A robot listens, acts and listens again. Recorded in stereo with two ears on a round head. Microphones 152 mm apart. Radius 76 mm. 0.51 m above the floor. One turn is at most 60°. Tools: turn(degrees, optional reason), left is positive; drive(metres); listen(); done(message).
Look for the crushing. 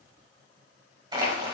turn(degrees=-25, reason="The crushing: about 25° right or 155° right.")
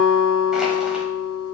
listen()
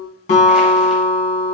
listen()
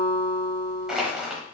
done("Facing the crushing, 1 to 2 m away.")